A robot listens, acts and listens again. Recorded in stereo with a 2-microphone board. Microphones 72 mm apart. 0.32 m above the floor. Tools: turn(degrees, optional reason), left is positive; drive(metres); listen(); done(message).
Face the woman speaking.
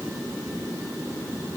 listen()
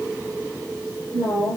turn(degrees=-90)
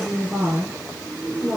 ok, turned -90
done("Facing the woman speaking.")